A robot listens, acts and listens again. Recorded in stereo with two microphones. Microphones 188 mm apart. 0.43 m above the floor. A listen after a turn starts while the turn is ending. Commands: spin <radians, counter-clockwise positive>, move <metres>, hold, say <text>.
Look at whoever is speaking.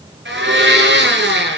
hold
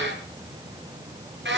hold
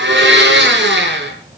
say I can't make out anyone speaking to turn to.